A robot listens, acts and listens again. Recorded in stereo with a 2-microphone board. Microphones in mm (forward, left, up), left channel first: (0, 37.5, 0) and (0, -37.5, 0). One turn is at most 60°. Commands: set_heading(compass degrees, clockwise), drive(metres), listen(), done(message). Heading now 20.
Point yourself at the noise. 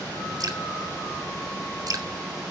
set_heading(75)
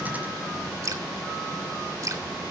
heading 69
set_heading(129)
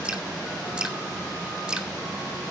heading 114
set_heading(129)
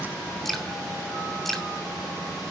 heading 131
done("Found it: dripping, straight ahead.")